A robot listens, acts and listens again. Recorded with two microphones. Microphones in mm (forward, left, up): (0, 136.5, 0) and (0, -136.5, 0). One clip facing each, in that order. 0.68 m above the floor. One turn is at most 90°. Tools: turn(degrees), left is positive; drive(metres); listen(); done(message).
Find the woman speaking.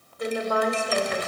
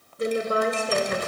turn(degrees=-30)
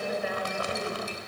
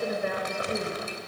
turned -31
turn(degrees=-90)
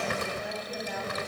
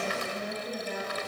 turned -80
turn(degrees=-45)
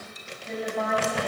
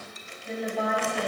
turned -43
done("Found it: a woman speaking, straight ahead, over 4 m away.")